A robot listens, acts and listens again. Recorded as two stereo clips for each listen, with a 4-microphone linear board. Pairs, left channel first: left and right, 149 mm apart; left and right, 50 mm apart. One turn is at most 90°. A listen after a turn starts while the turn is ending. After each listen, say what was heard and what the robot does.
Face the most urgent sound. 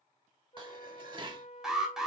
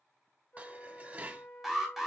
Turn 30° left.
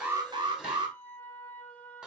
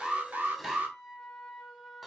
So it is at 35° right. Turn 35° right.
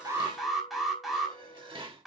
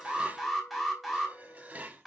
Found it: an alarm, straight ahead.